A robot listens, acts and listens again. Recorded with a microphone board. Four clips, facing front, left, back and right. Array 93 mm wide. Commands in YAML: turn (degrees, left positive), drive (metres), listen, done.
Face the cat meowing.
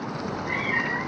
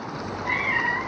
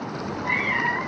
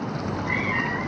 turn: 130
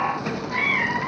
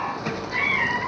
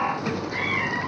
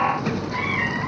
turn: 25
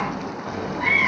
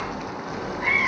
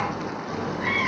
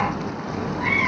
done: "Facing the cat meowing."